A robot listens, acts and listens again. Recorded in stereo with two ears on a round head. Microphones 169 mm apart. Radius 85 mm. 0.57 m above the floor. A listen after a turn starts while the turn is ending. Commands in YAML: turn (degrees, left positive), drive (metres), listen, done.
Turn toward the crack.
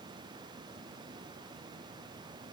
listen: true
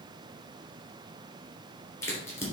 turn: 30
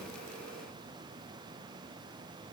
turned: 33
listen: true
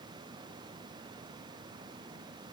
done: "I heard a crack, but can't make it out now. It was about 20° right or 135° left."